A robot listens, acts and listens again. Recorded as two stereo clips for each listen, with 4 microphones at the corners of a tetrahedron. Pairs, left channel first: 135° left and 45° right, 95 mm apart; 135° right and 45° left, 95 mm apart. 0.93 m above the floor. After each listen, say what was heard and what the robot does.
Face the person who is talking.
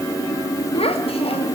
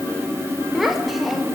The child speaking: 135° left. Turn 135° left.
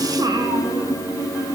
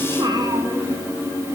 Found it: a child speaking, straight ahead.